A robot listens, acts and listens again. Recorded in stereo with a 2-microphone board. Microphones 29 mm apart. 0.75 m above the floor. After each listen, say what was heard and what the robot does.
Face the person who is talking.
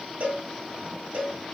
Keep listening.
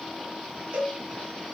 Keep listening.
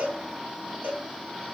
I can't make out anyone speaking, only a cowbell.